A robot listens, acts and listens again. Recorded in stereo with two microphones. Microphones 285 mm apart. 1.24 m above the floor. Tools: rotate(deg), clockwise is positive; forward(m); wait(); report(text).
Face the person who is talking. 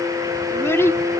rotate(-30)
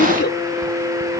rotate(-140)
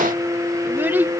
report("Found it: a child speaking, straight ahead.")